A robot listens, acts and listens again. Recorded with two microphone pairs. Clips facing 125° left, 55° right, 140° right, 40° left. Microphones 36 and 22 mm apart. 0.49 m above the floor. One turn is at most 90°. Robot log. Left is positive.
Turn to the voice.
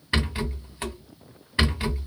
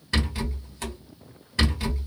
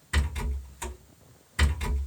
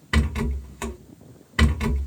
cmd idle
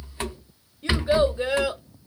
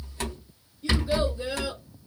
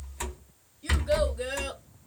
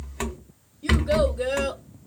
note: The child speaking: 120° left.
cmd yaw +90
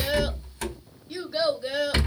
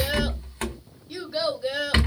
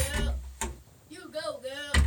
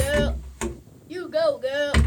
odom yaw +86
note: The child speaking is now 35° left.
cmd yaw +35
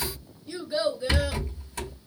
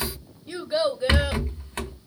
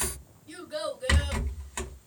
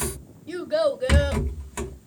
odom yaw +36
end: Facing the child speaking.